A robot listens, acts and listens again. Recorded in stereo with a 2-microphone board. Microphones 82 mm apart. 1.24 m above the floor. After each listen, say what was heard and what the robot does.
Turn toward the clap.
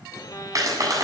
The clap: about 45° right or 135° right. Turn 45° right.
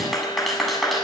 Found it: a clap, straight ahead.